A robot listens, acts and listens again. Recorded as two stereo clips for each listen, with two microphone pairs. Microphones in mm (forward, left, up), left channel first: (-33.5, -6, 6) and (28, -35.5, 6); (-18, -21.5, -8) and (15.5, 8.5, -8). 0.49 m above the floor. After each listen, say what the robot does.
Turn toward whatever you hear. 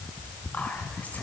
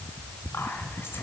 Turn 140° right.
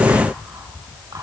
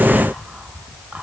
Keep listening.
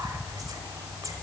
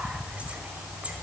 Turn 15° right.
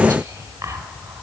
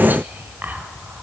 Found it: whispering, straight ahead.